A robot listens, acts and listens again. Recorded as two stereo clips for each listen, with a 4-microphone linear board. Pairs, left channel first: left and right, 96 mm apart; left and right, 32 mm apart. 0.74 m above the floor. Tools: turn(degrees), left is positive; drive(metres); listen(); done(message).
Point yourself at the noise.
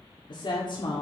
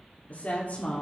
turn(degrees=55)
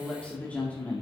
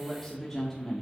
turn(degrees=20)
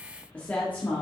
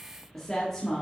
turn(degrees=20)
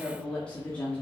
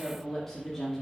turn(degrees=15)
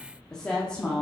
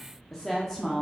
turn(degrees=15)
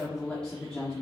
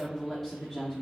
turn(degrees=10)
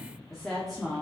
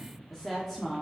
done("Facing the woman speaking, 1 to 2 m away.")